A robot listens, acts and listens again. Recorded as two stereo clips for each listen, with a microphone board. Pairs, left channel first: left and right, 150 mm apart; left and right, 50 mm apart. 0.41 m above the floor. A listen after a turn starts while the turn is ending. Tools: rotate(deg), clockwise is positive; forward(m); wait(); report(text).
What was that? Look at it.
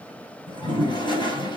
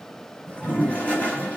rotate(-30)
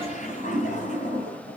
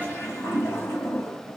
rotate(-115)
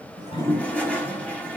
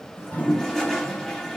rotate(-10)
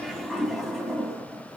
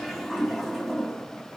report("Facing the toilet flushing.")